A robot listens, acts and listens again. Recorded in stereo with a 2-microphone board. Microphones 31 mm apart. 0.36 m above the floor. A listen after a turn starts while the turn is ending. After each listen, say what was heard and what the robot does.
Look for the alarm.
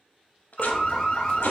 The alarm: about 30° left or 150° left. Turn 30° left.
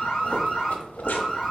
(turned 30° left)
Found it: an alarm, straight ahead, 1 to 2 m away.